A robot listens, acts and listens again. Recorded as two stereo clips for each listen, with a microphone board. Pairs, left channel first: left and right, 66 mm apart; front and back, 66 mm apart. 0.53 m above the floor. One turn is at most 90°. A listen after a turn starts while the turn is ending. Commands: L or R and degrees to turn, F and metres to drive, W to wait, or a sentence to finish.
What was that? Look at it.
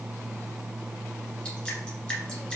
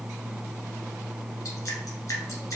L10
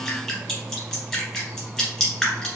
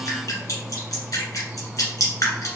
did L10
Facing the dripping.